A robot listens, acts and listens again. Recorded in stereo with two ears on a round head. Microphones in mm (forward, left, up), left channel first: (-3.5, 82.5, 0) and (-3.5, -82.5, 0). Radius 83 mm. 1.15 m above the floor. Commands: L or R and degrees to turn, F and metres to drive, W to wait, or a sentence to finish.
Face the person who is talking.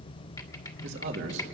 R75
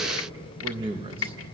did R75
R30
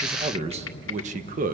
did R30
R45
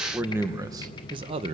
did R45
R35
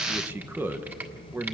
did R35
R10
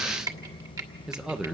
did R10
Found it: a man speaking, straight ahead.